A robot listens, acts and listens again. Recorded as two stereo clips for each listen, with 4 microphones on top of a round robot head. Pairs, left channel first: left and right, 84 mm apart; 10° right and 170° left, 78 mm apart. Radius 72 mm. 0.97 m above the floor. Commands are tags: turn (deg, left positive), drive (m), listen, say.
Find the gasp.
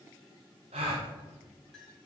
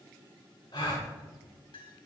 <turn deg="-65"/>
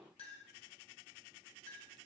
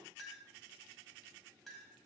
<say>Facing where the gasp came from. I can't hear it now.</say>